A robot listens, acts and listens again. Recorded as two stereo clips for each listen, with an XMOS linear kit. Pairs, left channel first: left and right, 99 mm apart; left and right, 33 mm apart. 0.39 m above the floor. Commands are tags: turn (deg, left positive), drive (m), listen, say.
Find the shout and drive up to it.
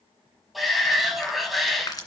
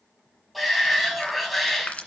<turn deg="30"/>
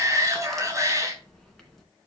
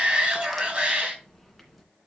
<turn deg="-35"/>
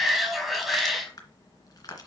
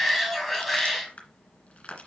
<drive m="1.0"/>
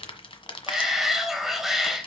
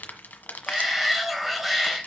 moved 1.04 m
<drive m="1.0"/>
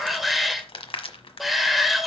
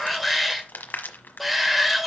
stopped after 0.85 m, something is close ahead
<say>I am next to the shout.</say>